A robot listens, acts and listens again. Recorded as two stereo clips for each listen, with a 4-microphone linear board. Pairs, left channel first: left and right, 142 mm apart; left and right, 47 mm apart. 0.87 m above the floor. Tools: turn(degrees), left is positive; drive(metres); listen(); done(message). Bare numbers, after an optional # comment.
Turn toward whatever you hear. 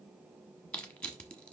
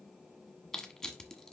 turn(30)
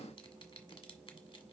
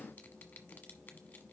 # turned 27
listen()
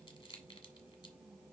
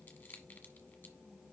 # So it is at 145° left.
turn(145)
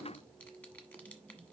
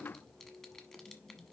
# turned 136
# Nothing new. It was at 10° left.
turn(10)
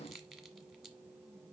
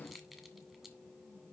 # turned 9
done("Facing the crushing, 1 to 2 m away.")